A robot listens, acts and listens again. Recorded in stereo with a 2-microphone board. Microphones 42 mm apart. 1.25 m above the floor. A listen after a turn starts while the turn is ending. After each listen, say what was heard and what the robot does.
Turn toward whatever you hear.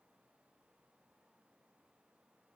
Keep listening.
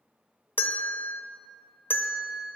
The bell: about 55° left or 125° left. Turn 55° left.
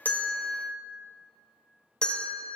So it is at 25° left. Turn 25° left.
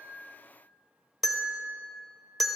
Facing the bell, under 1 m away.